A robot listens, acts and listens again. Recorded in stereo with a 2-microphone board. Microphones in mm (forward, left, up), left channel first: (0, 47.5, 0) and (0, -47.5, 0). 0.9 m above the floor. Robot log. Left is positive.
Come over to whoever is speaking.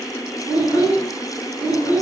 cmd yaw -30
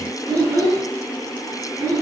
note: So it is at 15° left.
cmd yaw +15
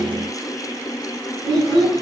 cmd fwd 1.0
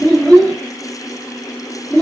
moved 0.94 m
note: The child speaking is now 15° left.
cmd yaw +15
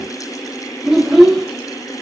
cmd fwd 1.0
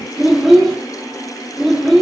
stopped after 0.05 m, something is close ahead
end: I am next to the child speaking.